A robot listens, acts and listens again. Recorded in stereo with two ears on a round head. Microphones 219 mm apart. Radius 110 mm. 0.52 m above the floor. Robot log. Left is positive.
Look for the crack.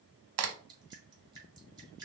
note: The crack: about 70° right or 110° right.
cmd yaw -70
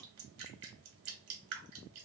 cmd idle
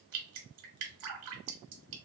end: I heard a crack, but can't make it out now. It was about straight ahead or 40° right.